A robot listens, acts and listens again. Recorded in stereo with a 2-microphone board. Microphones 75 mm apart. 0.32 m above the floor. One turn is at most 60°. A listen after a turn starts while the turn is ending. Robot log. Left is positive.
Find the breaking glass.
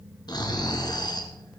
cmd idle
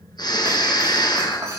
note: The breaking glass: about 40° right or 140° right.
cmd yaw -40
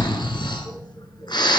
cmd idle
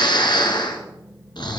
end: I heard breaking glass, but can't make it out now. It was about straight ahead or 100° right.